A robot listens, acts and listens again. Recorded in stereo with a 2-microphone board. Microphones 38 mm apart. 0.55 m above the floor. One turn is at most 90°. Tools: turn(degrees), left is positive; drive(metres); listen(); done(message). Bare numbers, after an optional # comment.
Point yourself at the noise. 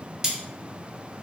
turn(-30)
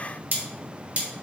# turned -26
# So it is at 140° right.
turn(-90)
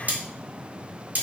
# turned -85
# The cutlery clinking is now 50° right.
turn(-50)
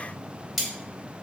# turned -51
done("Facing the cutlery clinking.")